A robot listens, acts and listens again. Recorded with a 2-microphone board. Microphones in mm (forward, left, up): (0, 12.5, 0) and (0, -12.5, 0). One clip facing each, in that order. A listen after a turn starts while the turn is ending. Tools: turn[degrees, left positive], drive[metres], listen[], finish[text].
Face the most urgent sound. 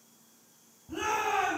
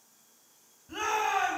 Thought: The shout: about 45° right or 135° right.
Action: turn[-45]
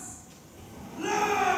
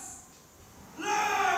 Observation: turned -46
Thought: So it is at 10° right.
Action: turn[-10]
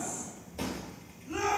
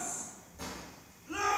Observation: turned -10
Action: finish[Facing the shout, 2 to 4 m away.]